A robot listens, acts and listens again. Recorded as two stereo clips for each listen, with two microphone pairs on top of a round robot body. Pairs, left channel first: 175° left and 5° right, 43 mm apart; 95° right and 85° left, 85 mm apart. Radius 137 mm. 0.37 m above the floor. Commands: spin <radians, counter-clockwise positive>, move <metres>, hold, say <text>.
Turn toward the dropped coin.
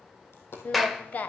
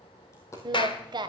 spin -2.62
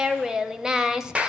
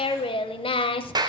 say Facing where the dropped coin came from. I can't hear it now.